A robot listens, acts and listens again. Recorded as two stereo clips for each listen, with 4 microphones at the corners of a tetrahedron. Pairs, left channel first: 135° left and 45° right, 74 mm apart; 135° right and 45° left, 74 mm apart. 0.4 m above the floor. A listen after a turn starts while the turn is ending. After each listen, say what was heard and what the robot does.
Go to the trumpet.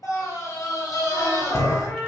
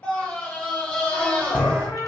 The trumpet: 140° right. Turn 140° right.
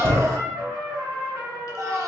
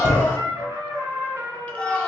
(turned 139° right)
Drive 1.0 m forward.
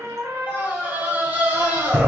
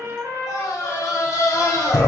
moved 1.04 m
Drive 1.0 m forward.
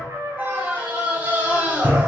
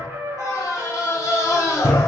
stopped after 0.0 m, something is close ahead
I am next to the trumpet.